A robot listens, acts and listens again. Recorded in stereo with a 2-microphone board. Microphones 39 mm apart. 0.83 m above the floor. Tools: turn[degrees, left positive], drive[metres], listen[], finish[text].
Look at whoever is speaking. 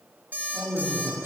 Thought: The man speaking: about 70° right or 110° right.
Action: turn[-70]
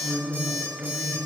Thought: So it is at 25° right.
Action: turn[-25]
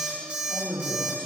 Action: finish[Found it: a man speaking, straight ahead.]